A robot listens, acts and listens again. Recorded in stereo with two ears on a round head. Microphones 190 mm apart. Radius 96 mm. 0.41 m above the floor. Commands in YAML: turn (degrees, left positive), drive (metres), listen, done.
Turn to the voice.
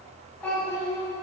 turn: 30
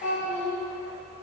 turn: 140
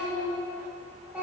done: "Found it: a child speaking, straight ahead, 1 to 2 m away."